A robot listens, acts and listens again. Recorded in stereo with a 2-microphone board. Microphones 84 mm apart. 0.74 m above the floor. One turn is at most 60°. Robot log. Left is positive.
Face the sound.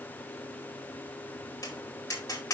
note: The tapping: about 45° left or 135° left.
cmd yaw +45
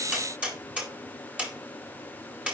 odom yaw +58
note: So it is at 15° right.
cmd yaw -15
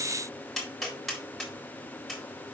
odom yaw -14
end: Facing the tapping, 2 to 4 m away.